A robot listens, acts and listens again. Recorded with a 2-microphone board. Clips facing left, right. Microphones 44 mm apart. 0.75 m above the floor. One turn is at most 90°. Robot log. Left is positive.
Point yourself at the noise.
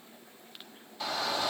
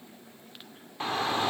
note: The shout: about 35° right or 145° right.
cmd yaw -35
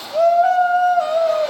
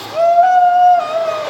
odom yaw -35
note: So it is at 110° right.
cmd yaw -90
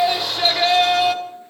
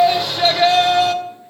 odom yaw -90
end: Facing the shout.